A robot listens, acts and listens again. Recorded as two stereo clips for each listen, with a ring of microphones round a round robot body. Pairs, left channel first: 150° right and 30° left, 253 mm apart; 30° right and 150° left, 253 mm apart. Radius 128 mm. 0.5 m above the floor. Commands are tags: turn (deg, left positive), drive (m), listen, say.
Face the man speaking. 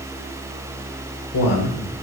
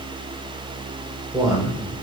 <turn deg="-135"/>
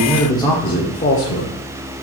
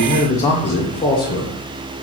<turn deg="-100"/>
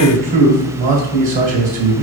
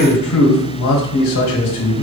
<turn deg="-25"/>
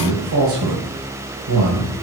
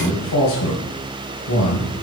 <say>Found it: a man speaking, straight ahead.</say>